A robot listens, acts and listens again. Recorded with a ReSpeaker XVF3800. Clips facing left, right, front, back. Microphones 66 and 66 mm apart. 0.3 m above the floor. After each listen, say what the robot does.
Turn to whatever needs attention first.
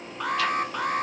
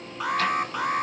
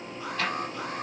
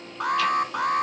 Turn 175° right.
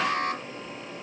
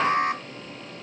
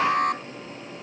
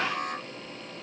Turn 25° right.
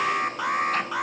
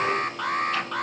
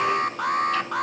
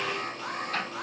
Turn 10° left.
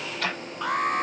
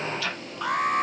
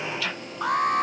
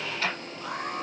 Found it: an alarm, straight ahead.